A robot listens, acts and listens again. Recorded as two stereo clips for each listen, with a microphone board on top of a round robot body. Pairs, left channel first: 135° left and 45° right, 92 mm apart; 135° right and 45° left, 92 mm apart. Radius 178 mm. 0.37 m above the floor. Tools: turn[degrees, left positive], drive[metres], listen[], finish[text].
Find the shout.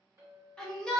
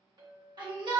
Thought: The shout: 55° left.
Action: turn[55]
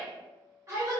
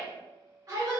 Action: finish[Facing the shout.]